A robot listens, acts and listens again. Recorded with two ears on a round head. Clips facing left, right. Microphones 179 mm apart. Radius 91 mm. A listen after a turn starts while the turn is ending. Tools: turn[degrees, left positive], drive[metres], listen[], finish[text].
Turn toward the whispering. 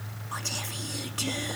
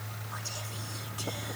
Thought: The whispering: about 70° left or 110° left.
Action: turn[70]
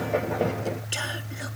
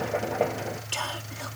Thought: So it is at 15° left.
Action: turn[15]
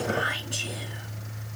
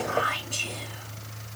Thought: The whispering is now 10° left.
Action: turn[10]
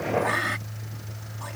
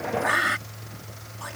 Action: finish[Facing the whispering.]